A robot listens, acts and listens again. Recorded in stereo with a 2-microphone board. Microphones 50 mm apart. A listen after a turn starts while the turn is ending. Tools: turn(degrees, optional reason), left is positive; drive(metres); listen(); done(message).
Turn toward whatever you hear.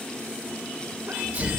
turn(degrees=-30, reason="The sneeze: about 30° right or 150° right.")
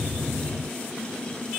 listen()
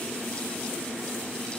done("I heard a sneeze, but can't make it out now. It was about straight ahead or 120° right.")